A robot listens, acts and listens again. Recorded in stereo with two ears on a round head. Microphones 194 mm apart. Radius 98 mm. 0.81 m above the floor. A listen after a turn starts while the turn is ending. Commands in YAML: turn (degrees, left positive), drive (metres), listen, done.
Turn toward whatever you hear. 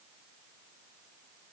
listen: true
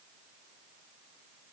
listen: true
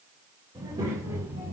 turn: -30
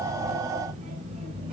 turn: -150
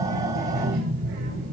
turn: -50
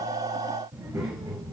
turn: -10
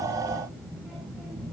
done: "Facing the child speaking."